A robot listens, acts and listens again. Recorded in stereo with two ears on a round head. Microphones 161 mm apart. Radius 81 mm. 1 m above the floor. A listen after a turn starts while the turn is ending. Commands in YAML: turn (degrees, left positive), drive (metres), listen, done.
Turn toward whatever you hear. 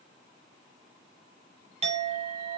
turn: -35
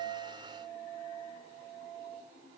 done: "Found it: a clink, straight ahead, under 1 m away."